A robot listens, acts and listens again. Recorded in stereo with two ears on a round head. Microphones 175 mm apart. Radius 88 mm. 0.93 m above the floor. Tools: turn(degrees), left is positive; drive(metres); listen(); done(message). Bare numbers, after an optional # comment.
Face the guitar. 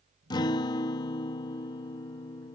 # The guitar: about 20° left or 160° left.
turn(20)
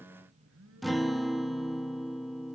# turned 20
done("Found it: a guitar, straight ahead.")